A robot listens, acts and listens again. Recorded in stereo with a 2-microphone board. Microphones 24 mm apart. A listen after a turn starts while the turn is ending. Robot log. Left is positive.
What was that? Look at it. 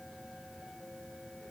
cmd idle
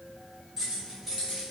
cmd yaw -30
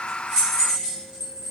note: So it is at 140° right.
cmd yaw -140
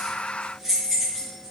end: Facing the keys jangling.